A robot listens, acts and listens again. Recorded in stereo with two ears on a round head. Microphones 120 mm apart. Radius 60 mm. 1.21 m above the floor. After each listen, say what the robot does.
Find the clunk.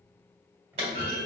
Turn 45° right.
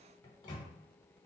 Keep listening.
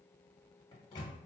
I heard a clunk, but can't make it out now. It was about straight ahead or 90° right.